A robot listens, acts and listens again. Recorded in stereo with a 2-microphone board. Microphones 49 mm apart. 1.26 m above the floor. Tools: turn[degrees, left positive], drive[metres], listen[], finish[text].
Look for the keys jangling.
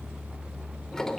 Action: listen[]
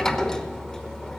Action: listen[]
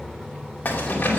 Thought: The keys jangling: about 35° left or 145° left.
Action: turn[35]
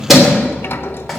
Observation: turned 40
Action: finish[Facing the keys jangling, 2 to 4 m away.]